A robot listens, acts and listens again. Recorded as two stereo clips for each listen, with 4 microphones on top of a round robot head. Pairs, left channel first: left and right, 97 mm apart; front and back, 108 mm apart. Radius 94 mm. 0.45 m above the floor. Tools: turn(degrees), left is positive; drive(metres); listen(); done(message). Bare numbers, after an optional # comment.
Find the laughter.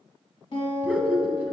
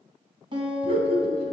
# The laughter: 165° right.
turn(-165)
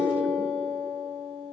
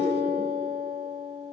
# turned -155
# Nothing new. It was at 10° right.
turn(-10)
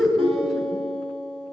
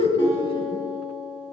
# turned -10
done("Facing the laughter.")